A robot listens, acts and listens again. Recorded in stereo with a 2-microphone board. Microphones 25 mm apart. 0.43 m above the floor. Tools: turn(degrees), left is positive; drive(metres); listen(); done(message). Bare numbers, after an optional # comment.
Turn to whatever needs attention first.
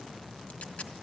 listen()
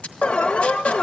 # The alarm: about 55° left or 125° left.
turn(55)
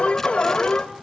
# So it is at 55° left.
turn(55)
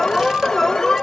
# The alarm is now 20° left.
turn(20)
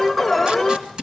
done("Found it: an alarm, straight ahead, under 1 m away.")